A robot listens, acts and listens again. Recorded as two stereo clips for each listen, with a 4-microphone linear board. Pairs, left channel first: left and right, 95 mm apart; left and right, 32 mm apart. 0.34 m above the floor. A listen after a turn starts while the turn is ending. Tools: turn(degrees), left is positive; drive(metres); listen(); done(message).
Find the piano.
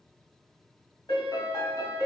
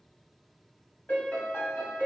turn(degrees=55)
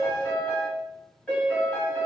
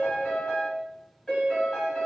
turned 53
turn(degrees=20)
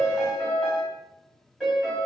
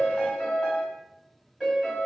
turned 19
done("Facing the piano, 1 to 2 m away.")